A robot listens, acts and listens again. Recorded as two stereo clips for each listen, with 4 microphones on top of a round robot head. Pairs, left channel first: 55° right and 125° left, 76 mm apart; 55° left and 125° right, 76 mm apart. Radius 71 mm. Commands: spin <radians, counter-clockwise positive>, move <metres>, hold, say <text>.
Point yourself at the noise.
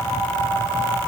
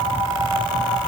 hold
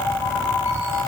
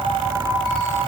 hold
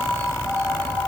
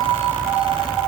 say I can't make out anything to turn to.